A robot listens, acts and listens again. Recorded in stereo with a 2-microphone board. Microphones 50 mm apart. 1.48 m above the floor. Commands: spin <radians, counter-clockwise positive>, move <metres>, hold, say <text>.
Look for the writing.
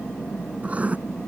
spin -0.44
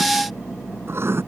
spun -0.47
spin -2.18
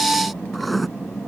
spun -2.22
say Found it: writing, straight ahead.